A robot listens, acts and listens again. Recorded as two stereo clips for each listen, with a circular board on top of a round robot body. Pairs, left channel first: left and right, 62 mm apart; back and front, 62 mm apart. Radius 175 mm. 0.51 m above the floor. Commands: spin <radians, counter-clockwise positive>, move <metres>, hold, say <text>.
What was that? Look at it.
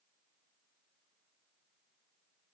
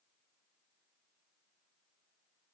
hold
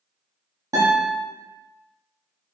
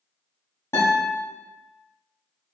spin -2.27
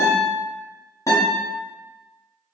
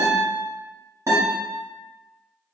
spin 0.79
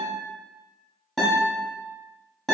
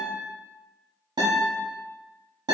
say Facing the guitar.